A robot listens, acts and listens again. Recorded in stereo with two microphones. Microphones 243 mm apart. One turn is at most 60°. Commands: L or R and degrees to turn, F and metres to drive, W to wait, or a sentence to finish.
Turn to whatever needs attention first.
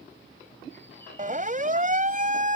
R35
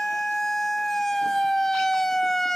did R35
Found it: a siren, straight ahead.